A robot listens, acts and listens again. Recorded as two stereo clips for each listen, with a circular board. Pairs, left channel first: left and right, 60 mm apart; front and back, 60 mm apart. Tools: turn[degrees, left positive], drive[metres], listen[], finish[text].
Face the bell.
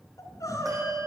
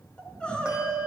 Thought: The bell: 105° right.
Action: turn[-105]
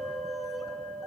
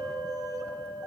Action: finish[Found it: a bell, straight ahead.]